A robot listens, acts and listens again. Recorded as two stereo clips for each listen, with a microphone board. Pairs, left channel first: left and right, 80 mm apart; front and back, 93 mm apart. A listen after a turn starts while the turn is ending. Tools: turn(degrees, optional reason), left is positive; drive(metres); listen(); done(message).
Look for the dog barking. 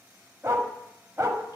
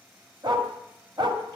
turn(degrees=-145, reason="The dog barking: 145° right.")
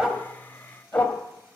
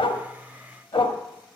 turn(degrees=20, reason="The dog barking is now 20° left.")
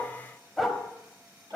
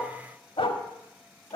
done("Found it: a dog barking, straight ahead.")